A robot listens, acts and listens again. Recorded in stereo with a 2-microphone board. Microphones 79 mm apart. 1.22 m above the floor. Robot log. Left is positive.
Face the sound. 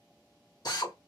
note: The drill: about 55° left or 125° left.
cmd yaw +55
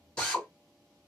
note: So it is at 10° left.
cmd yaw +10
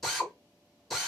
end: Found it: a drill, straight ahead, 1 to 2 m away.